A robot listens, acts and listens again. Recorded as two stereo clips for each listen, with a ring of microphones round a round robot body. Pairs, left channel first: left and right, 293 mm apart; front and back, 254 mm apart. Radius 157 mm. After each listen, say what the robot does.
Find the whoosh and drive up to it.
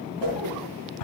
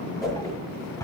Turn 80° right.
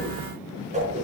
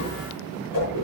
Turn 20° right.
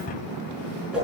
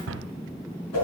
Drive 1.0 m forward.
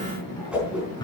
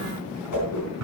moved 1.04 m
Drive 1.0 m forward.
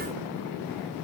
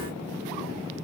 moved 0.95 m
Keep listening.
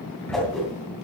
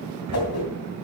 Drive 1.0 m forward.
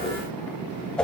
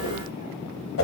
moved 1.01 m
Drive 1.0 m forward.
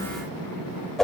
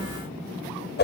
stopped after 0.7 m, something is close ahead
Arrived at the whoosh, straight ahead.